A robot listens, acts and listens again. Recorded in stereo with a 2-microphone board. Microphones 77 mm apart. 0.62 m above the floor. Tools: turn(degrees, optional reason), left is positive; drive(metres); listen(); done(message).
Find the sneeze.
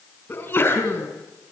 turn(degrees=30, reason="The sneeze: about 30° left or 150° left.")
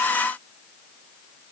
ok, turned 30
listen()
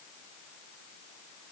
done("I heard a sneeze, but can't make it out now. It was about straight ahead or 120° left.")